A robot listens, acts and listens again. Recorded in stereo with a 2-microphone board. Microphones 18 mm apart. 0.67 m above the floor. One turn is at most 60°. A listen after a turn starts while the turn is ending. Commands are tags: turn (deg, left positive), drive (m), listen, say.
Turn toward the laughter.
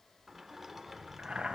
<listen/>
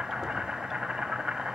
<listen/>
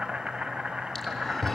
<turn deg="15"/>
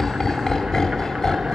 <turn deg="35"/>
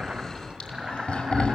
<turn deg="60"/>
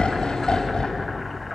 <turn deg="40"/>
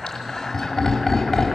<turn deg="25"/>
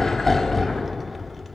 <say>Found it: laughter, straight ahead.</say>